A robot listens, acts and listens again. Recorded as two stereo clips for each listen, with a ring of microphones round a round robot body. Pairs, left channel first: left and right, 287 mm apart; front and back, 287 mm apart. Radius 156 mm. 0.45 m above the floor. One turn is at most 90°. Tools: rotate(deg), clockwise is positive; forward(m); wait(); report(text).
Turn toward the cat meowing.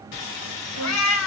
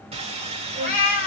rotate(-55)
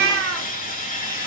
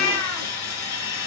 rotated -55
rotate(45)
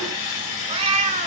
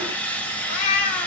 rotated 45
rotate(25)
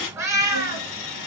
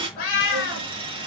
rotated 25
rotate(15)
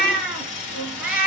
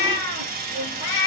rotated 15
report("Facing the cat meowing.")